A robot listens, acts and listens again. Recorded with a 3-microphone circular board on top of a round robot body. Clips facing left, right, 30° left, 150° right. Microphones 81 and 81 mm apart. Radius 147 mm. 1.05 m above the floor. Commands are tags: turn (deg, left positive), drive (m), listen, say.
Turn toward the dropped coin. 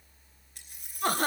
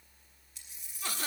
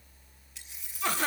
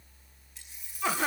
<turn deg="45"/>
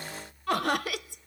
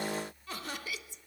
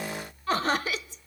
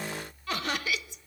<say>Facing where the dropped coin came from. I can't hear it now.</say>